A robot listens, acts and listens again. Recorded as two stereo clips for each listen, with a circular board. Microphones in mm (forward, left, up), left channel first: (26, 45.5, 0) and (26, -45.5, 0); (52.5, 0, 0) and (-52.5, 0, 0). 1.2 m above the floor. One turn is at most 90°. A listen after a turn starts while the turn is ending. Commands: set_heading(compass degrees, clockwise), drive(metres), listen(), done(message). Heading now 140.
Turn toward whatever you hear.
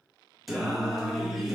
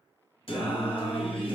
done("Found it: singing, straight ahead, under 1 m away.")